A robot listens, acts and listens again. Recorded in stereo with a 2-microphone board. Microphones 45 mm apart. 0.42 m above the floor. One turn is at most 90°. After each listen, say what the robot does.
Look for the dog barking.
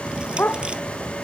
Turn 50° left.
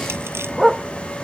Facing the dog barking.